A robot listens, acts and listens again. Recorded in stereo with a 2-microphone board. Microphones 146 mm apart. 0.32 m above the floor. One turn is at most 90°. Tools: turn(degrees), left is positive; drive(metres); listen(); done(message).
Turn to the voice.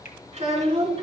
turn(degrees=-40)
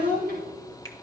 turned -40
turn(degrees=-90)
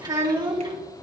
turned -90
turn(degrees=-30)
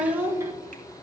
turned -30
turn(degrees=-20)
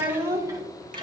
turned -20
turn(degrees=-30)
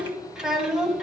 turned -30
done("Found it: a child speaking, straight ahead.")